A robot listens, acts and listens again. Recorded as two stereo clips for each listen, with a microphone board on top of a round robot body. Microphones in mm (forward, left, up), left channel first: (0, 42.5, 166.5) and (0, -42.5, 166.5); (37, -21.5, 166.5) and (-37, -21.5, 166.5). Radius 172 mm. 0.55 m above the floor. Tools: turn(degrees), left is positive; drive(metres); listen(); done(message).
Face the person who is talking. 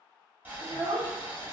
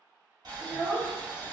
turn(degrees=-110)
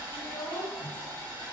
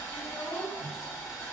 listen()
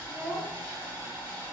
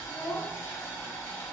listen()
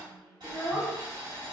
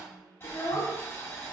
turn(degrees=-10)
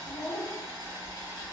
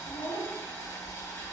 done("Found it: a child speaking, straight ahead.")